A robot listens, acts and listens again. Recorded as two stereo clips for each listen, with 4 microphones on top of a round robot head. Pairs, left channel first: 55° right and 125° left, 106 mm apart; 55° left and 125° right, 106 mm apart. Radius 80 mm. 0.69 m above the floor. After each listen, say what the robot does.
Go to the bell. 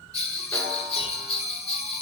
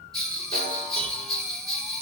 Turn 30° right.
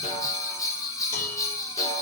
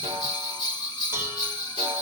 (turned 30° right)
Drive 1.0 m forward.
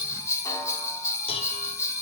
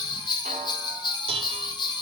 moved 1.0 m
Turn 10° left.
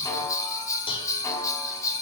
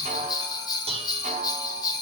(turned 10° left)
Drive 1.0 m forward.
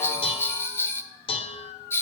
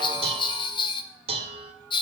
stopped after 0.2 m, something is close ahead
Turn 15° left.
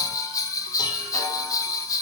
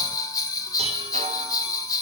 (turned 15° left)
Arrived at the bell, straight ahead.